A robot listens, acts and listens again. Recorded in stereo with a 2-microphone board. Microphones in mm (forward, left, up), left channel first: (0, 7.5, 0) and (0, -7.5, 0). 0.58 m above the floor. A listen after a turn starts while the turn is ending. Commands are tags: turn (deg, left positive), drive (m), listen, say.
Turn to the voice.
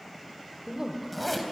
<turn deg="-35"/>
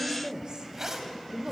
<turn deg="-105"/>
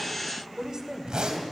<turn deg="-40"/>
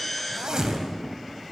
<listen/>
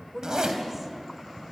<turn deg="-10"/>
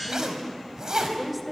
<say>Found it: a woman speaking, straight ahead, 2 to 4 m away.</say>